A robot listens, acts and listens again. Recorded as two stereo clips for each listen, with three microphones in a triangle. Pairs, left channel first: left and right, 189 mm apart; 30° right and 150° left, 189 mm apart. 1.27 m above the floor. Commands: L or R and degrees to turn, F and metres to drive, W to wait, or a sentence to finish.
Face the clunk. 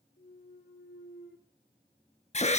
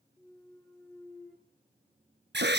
L55
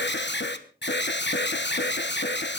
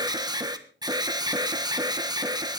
I heard a clunk from this way, but can't make it out now.